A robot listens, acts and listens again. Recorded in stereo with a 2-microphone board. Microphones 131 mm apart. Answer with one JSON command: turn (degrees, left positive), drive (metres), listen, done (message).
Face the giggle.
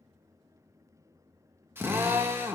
{"listen": true}
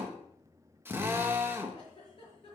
{"turn": 45}
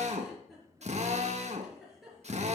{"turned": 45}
{"done": "Found it: a giggle, straight ahead."}